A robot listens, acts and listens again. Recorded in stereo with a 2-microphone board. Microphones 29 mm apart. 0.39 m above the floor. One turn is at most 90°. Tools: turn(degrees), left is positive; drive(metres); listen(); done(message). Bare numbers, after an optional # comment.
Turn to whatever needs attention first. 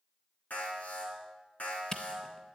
# The alarm: about 60° left or 120° left.
turn(60)
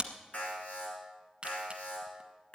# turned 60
# So it is at 60° left.
turn(60)
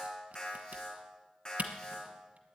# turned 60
# The alarm is now 30° left.
turn(30)
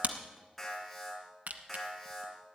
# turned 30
# The alarm is now 10° left.
turn(10)
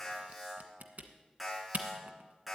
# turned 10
done("Found it: an alarm, straight ahead, over 4 m away.")